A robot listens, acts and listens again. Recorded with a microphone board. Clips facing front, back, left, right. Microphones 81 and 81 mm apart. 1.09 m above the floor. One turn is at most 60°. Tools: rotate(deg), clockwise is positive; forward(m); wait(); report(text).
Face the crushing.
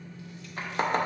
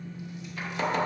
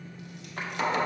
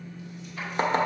wait()
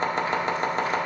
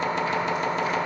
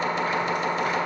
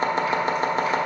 wait()
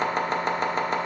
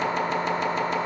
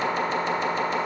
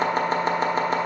report("I can't make out crushing to turn to.")